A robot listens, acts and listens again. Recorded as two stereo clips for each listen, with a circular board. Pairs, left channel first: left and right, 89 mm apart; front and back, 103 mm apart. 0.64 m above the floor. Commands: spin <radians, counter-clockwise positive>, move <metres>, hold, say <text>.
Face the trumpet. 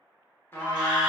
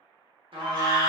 spin 2.71
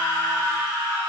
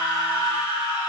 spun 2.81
spin -0.17
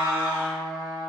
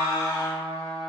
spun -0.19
say Found it: a trumpet, straight ahead.